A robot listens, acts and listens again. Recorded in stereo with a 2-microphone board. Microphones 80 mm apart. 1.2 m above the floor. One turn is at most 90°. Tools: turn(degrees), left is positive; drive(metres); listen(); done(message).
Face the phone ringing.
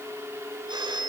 turn(degrees=-65)
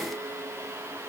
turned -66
listen()
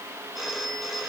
done("Facing the phone ringing.")